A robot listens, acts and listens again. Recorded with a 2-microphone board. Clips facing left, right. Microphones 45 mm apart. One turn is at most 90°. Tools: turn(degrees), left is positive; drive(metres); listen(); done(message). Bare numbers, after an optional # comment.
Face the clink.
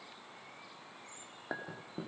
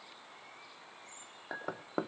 turn(30)
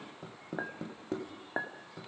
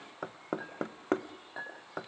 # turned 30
# So it is at 145° left.
turn(90)
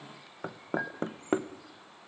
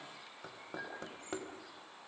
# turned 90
# The clink is now 50° left.
turn(50)
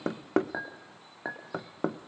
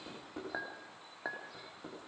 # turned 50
# The clink is now 10° left.
turn(10)
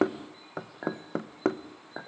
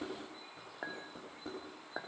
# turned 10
done("Found it: a clink, straight ahead.")